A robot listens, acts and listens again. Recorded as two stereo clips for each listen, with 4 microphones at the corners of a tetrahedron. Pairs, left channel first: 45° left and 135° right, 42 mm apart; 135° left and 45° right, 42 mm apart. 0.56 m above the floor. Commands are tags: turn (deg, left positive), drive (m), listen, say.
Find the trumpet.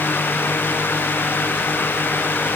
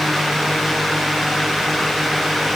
<listen/>
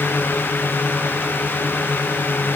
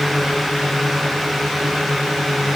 <listen/>
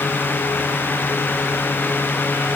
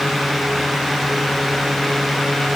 <say>I can't make out a trumpet to turn to.</say>